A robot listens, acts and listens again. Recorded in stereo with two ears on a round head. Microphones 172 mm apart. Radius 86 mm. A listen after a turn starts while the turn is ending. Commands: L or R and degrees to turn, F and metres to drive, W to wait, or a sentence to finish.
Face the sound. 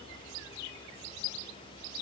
W
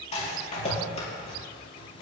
L35
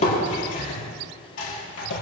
L110
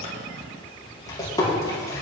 L20
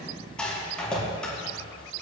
Found it: a rattle, straight ahead, over 4 m away.